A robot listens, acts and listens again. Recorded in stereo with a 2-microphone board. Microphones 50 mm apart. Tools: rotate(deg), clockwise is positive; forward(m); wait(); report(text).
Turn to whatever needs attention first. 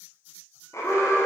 rotate(-90)
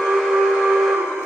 report("Found it: an alarm, straight ahead.")